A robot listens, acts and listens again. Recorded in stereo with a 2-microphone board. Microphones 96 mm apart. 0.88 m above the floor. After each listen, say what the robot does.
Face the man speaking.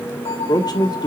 Turn 50° left.
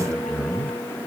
Found it: a man speaking, straight ahead, 2 to 4 m away.